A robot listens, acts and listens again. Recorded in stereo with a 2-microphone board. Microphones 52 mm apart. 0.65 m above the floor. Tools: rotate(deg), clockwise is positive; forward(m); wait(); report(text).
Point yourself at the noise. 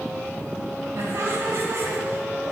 rotate(65)
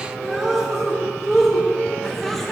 report("Facing the laughter, 1 to 2 m away.")